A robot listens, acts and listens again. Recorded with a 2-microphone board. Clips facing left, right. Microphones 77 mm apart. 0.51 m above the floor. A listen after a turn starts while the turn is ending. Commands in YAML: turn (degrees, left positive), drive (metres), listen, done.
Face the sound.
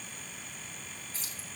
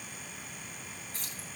turn: -50
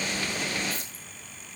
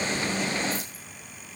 listen: true
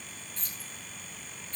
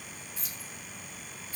turn: -15
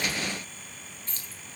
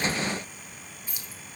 turn: -10
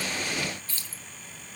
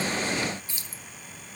turn: -20
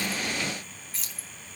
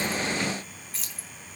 done: "Found it: keys jangling, straight ahead, 1 to 2 m away."